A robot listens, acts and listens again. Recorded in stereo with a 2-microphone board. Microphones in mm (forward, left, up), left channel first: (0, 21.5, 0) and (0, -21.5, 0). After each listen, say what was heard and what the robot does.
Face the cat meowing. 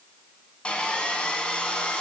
Keep listening.
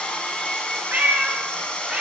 The cat meowing: about 25° right or 155° right. Turn 25° right.
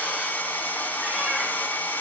Keep listening.
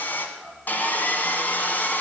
So it is at 15° left. Turn 15° left.
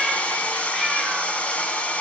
Keep listening.
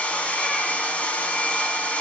Keep listening.
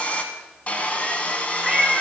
Facing the cat meowing.